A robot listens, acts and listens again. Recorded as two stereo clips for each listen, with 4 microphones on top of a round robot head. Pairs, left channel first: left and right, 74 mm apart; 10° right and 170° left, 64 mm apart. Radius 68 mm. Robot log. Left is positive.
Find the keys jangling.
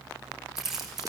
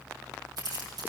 note: The keys jangling: 175° right.
cmd yaw -175
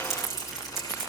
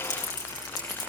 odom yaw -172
end: Found it: keys jangling, straight ahead, over 4 m away.